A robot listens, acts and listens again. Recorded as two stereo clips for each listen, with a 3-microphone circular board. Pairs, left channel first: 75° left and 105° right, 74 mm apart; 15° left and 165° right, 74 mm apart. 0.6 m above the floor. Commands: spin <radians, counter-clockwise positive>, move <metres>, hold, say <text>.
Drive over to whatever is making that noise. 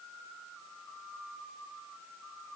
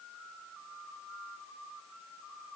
hold
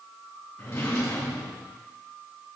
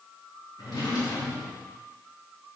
spin 0.44
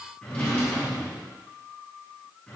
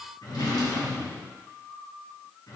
move 1.0
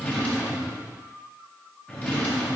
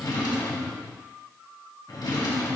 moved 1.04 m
move 1.0
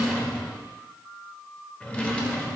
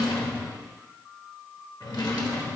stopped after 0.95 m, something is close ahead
say Arrived at the drawer, straight ahead.